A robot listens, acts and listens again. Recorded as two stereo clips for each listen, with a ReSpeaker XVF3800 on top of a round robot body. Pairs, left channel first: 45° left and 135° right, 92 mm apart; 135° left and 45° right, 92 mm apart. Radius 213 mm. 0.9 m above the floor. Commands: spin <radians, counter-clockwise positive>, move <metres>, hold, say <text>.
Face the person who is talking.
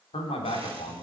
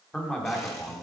spin 0.87
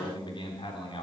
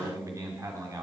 spin 0.17
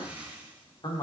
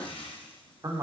say Facing the man speaking.